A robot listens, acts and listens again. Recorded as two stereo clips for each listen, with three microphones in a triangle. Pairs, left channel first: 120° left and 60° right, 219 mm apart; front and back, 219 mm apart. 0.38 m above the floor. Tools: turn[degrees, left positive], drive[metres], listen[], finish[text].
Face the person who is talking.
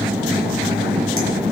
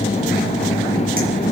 Action: listen[]
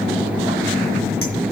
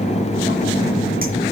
Action: listen[]
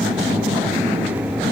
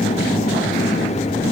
Action: finish[I can't make out anyone speaking.]